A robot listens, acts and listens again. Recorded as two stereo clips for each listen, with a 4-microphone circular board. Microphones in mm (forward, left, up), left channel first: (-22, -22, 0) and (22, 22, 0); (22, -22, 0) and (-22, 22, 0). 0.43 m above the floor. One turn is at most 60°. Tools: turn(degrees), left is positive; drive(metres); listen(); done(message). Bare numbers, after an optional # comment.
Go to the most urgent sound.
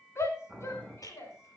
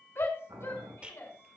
# The shout: 90° right.
turn(-60)
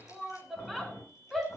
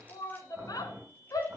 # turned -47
# The shout is now 40° right.
turn(-40)
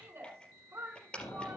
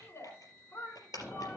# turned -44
drive(1.0)
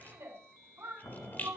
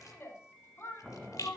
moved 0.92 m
drive(1.0)
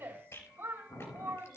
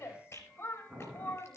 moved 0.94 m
drive(1.0)
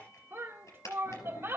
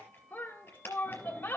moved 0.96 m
# The shout is now 10° left.
turn(10)
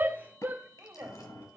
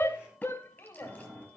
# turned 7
drive(1.0)
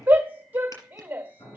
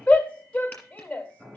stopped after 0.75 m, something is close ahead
# The shout is now 15° left.
turn(15)
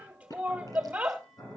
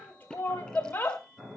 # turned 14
done("Arrived at the shout, straight ahead.")